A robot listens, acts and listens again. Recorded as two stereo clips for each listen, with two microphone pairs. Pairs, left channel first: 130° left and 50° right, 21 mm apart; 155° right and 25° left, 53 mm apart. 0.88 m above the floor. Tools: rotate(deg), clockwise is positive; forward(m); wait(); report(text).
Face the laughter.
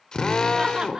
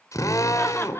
rotate(110)
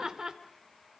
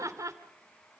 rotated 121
report("Found it: laughter, straight ahead.")